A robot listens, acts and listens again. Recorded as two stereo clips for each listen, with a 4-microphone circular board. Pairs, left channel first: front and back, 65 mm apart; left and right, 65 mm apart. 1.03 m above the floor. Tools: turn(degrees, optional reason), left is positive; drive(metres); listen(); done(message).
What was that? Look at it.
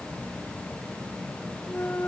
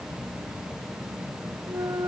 turn(degrees=-60, reason="The clunk: 60° right.")
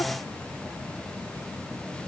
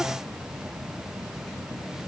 done("Facing where the clunk came from. I can't hear it now.")